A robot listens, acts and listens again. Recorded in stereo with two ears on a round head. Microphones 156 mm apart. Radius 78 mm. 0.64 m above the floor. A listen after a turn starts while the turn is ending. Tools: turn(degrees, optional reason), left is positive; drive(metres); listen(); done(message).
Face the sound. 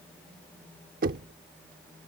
turn(degrees=-55, reason="The knocking: about 55° right or 125° right.")
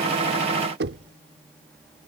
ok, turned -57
turn(degrees=-70, reason="So it is at 70° right.")
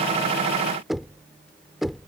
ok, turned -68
done("Found it: knocking, straight ahead.")